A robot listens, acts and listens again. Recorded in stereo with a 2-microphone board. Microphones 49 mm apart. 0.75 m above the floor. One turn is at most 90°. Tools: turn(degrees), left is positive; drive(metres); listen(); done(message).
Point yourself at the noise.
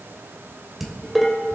turn(degrees=-30)
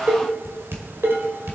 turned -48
turn(degrees=-90)
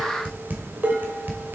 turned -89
turn(degrees=-40)
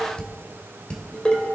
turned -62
turn(degrees=20)
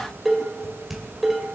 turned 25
done("Found it: dishes clattering, straight ahead, 1 to 2 m away.")